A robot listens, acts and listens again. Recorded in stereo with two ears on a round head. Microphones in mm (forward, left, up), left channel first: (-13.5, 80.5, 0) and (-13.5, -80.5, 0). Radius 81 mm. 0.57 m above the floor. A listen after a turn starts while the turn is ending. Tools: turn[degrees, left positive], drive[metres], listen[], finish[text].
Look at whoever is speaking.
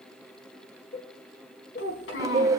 Thought: The child speaking: about 75° left or 105° left.
Action: turn[75]
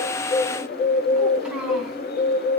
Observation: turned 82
Action: listen[]
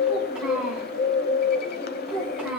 Action: finish[Found it: a child speaking, straight ahead, 2 to 4 m away.]